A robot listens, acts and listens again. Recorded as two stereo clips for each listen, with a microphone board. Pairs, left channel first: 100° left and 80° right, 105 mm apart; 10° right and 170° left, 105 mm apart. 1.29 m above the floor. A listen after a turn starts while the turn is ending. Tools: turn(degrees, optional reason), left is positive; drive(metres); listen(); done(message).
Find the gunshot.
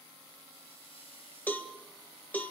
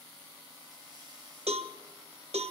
listen()
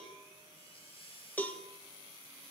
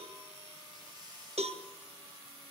listen()
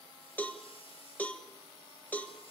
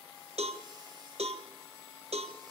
done("I can't make out a gunshot, only a cowbell.")